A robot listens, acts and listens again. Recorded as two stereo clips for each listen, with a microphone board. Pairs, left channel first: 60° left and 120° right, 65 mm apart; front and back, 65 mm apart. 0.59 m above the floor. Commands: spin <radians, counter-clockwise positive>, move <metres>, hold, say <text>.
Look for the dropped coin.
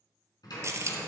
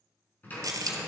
spin -2.79
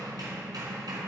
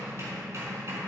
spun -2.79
say Facing where the dropped coin came from. I can't hear it now.